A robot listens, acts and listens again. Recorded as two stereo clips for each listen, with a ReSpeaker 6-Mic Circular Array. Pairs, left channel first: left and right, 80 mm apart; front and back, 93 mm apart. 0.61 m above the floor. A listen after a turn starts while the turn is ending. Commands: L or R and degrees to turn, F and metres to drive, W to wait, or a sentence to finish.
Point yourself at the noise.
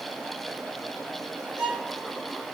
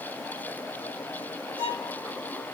R165
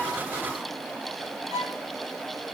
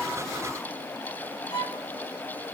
R40
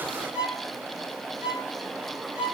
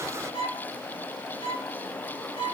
R15
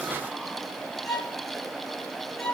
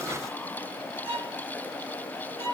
Facing the violin, over 4 m away.